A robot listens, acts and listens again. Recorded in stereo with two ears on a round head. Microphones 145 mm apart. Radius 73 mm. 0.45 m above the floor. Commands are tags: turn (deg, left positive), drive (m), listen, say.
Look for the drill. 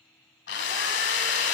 <turn deg="90"/>
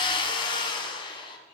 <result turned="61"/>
<turn deg="30"/>
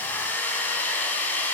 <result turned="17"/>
<turn deg="10"/>
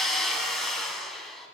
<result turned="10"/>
<say>Facing the drill, 1 to 2 m away.</say>